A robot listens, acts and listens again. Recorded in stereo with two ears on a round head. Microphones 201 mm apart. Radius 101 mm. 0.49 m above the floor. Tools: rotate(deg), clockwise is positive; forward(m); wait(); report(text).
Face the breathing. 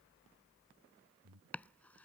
rotate(90)
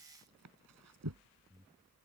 rotate(10)
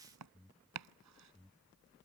report("Found it: breathing, straight ahead.")